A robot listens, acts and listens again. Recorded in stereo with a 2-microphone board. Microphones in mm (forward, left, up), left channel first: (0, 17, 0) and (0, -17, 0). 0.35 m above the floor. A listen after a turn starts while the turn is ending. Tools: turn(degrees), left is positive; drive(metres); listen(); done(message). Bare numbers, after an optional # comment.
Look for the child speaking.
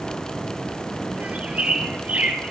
listen()
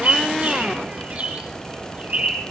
listen()
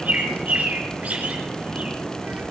done("I can't make out a child speaking, only a bird.")